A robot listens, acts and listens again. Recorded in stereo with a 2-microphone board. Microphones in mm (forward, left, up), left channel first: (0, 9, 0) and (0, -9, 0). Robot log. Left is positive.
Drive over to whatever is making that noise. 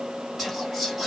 cmd yaw +30
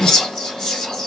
note: So it is at 145° left.
cmd yaw +145
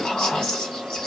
note: The whispering is now 50° left.
cmd yaw +50
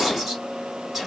note: The whispering is now 10° right.
cmd yaw -10
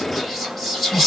cmd fwd 1.0
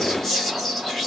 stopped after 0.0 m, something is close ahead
end: Something is in my way. I am facing the whispering but have not reached it.